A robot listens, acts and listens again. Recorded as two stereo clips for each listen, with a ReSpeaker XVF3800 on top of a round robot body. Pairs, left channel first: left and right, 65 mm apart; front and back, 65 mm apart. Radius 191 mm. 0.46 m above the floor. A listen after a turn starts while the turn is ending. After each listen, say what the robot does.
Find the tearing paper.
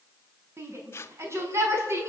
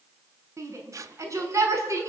Turn 140° left.
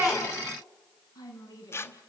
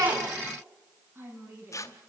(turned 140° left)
Turn 40° left.
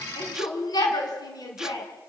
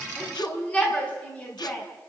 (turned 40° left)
Keep listening.
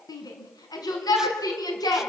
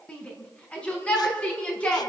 Keep listening.
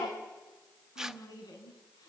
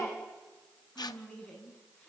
Facing the tearing paper.